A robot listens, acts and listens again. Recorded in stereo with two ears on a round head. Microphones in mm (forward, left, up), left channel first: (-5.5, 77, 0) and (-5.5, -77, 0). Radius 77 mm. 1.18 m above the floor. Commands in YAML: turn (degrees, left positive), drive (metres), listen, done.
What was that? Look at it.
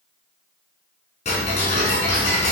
turn: 40
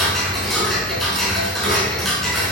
done: "Found it: ticking, straight ahead."